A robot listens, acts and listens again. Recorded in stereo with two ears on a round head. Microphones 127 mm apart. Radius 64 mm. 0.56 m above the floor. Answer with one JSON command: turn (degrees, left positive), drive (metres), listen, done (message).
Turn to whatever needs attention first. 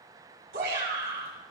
{"turn": -90}
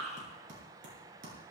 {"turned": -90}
{"done": "Found it: a shout, straight ahead, over 4 m away."}